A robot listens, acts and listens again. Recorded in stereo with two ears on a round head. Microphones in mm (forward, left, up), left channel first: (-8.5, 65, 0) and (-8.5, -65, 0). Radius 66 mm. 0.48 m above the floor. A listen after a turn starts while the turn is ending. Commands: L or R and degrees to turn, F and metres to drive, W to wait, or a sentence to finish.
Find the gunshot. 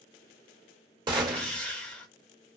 R30
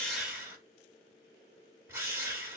W
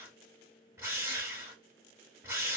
I heard a gunshot, but can't make it out now. It was about straight ahead or 120° right.